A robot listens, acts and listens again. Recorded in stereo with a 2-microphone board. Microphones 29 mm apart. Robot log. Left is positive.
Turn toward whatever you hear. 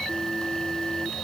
cmd idle
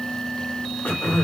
cmd yaw +90
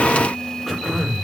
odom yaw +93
end: Facing the throat clearing.